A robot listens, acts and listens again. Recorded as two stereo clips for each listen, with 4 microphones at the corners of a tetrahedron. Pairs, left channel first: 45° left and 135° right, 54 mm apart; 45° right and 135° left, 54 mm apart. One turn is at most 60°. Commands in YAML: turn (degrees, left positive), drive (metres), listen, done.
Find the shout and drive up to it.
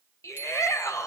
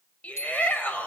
turn: 20
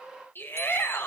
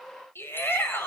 drive: 1.0
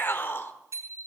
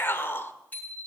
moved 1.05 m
drive: 1.0
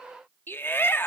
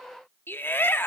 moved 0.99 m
drive: 1.0
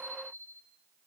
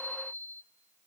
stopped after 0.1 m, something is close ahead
listen: true
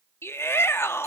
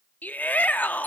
turn: 10
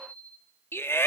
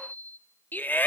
done: "I am next to the shout."